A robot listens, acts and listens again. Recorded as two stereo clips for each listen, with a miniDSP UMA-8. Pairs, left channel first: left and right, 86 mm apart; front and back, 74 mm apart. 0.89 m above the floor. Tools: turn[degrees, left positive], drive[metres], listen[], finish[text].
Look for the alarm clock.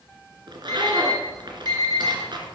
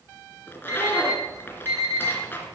Thought: The alarm clock: 140° left.
Action: turn[140]
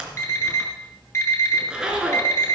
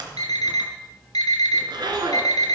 Thought: The alarm clock is now 30° left.
Action: turn[30]
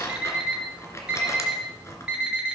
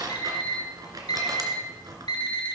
Thought: The alarm clock is now 10° right.
Action: turn[-10]
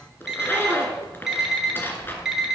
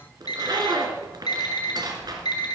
Action: finish[Facing the alarm clock.]